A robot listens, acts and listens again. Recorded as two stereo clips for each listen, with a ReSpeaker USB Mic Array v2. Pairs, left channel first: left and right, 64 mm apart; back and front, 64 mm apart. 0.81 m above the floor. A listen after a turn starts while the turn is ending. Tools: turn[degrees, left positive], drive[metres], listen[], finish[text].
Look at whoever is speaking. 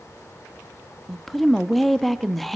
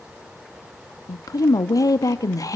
Thought: The woman speaking: 175° left.
Action: turn[175]
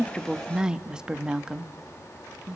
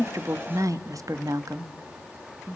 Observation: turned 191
Thought: The woman speaking is now 15° right.
Action: turn[-15]
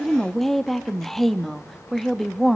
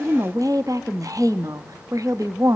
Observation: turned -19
Action: finish[Facing the woman speaking, under 1 m away.]